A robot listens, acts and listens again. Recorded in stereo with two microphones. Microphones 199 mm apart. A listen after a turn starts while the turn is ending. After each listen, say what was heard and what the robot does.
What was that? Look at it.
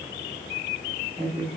The woman speaking: about 30° right or 150° right. Turn 30° right.
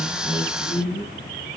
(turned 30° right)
Facing the woman speaking.